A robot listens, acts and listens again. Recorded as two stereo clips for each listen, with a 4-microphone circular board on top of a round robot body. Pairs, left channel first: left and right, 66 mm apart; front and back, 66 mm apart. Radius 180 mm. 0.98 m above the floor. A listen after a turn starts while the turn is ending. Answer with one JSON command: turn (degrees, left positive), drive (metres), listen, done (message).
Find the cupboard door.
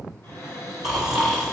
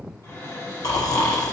{"turn": 40}
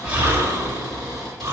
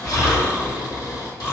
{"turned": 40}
{"listen": true}
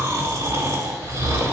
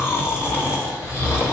{"listen": true}
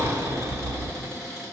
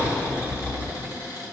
{"done": "Found it: a cupboard door, straight ahead."}